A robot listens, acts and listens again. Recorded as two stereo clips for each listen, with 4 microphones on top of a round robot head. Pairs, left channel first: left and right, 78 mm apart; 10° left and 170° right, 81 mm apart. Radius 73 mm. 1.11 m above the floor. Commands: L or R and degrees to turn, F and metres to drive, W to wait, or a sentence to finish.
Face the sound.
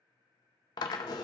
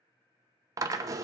L140
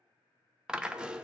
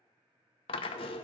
R10
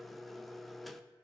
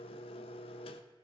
Found it: a drill, straight ahead, under 1 m away.